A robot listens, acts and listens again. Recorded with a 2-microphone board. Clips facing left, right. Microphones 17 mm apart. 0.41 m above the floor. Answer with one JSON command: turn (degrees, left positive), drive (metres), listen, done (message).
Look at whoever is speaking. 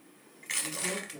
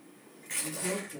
{"turn": -55}
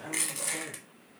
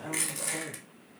{"turn": -15}
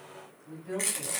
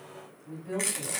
{"done": "Found it: a woman speaking, straight ahead."}